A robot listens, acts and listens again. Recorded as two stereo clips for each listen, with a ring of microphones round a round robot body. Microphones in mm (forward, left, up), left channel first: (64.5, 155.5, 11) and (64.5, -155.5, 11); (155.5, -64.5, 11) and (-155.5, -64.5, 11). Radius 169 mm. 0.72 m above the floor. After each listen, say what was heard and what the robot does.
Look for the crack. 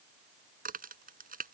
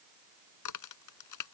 The crack: 25° right. Turn 25° right.
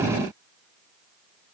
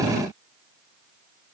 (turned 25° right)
I heard a crack from this way, but can't make it out now.